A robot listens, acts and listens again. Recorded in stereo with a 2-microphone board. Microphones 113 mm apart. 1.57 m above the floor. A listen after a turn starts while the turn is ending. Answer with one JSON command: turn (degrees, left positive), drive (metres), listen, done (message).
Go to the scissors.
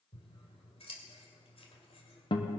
{"turn": 60}
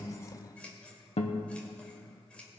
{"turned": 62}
{"turn": 10}
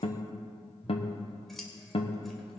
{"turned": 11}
{"drive": 1.0}
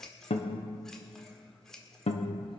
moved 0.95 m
{"drive": 1.0}
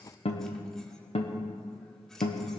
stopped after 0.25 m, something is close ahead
{"listen": true}
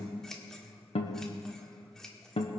{"done": "I am next to the scissors."}